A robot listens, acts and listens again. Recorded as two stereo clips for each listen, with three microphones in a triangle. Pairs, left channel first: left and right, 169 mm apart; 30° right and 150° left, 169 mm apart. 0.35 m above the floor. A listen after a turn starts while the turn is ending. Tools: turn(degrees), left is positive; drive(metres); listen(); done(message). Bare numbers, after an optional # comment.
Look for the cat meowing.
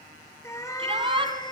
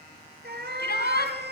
# The cat meowing: 150° left.
turn(150)
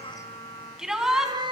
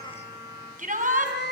# The cat meowing is now 30° right.
turn(-30)
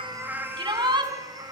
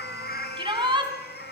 # The cat meowing is now 25° right.
turn(-25)
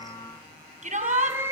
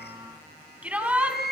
# The cat meowing is now 15° right.
turn(-15)
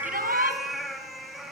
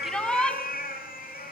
done("Facing the cat meowing, 2 to 4 m away.")